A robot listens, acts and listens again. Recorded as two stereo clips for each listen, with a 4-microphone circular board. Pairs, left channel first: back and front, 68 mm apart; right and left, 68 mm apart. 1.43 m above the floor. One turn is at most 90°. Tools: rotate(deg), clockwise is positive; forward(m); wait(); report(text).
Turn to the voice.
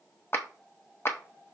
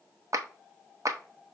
wait()
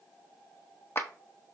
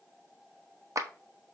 wait()
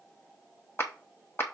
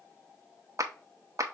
report("I can't make out anyone speaking, only a clap.")